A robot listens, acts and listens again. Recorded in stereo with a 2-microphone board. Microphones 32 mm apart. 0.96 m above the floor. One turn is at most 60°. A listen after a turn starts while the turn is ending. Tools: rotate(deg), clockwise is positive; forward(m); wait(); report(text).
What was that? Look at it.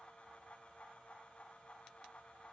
wait()
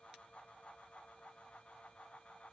wait()
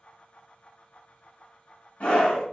rotate(-55)
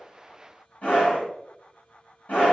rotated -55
rotate(-60)
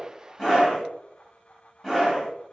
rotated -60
report("Found it: a scream, straight ahead, 1 to 2 m away.")